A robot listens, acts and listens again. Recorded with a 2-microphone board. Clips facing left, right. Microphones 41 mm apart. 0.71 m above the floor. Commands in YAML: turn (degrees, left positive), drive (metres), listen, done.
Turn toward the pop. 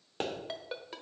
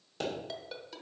turn: 35
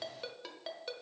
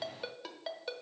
listen: true
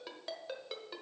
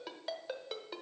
done: "I heard a pop, but can't make it out now. It was about straight ahead or 110° left."